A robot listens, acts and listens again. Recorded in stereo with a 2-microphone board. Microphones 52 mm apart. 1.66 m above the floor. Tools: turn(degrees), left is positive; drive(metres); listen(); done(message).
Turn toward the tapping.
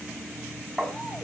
turn(degrees=30)
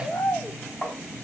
turn(degrees=155)
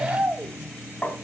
turn(degrees=25)
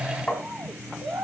turn(degrees=15)
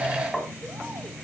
done("Found it: tapping, straight ahead, over 4 m away.")